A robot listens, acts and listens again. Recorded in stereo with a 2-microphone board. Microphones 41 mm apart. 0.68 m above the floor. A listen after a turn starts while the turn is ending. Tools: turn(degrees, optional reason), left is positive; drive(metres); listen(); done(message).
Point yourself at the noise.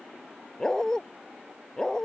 turn(degrees=15, reason="The dog barking: about 15° left or 165° left.")
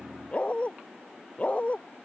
turn(degrees=35, reason="The dog barking: about 35° left or 145° left.")
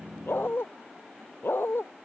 turn(degrees=110, reason="So it is at 110° left.")
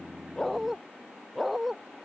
done("Facing the dog barking.")